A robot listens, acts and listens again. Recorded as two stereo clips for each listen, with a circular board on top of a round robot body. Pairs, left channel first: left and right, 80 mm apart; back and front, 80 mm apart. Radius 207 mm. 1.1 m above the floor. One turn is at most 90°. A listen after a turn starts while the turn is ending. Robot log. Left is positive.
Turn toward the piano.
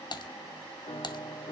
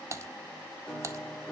note: The piano: 95° left.
cmd yaw +90
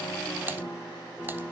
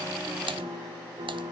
note: The piano is now 15° left.
cmd yaw +15
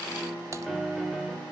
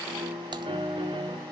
end: Found it: a piano, straight ahead.